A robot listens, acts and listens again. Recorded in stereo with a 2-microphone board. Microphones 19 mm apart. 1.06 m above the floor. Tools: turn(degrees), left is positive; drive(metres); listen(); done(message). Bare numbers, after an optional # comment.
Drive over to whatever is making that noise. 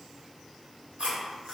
turn(-90)
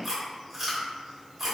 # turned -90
# So it is at 10° right.
turn(-10)
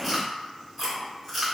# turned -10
drive(1.0)
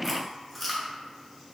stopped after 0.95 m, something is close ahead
done("I am next to the chewing.")